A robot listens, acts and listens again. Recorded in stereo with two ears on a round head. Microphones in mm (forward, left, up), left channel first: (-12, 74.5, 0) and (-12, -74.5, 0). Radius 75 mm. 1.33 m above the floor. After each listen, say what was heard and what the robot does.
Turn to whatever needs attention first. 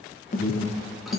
The alarm: about 50° left or 130° left. Turn 50° left.
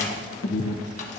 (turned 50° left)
So it is at 80° left. Turn 80° left.
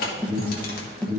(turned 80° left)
Found it: an alarm, straight ahead.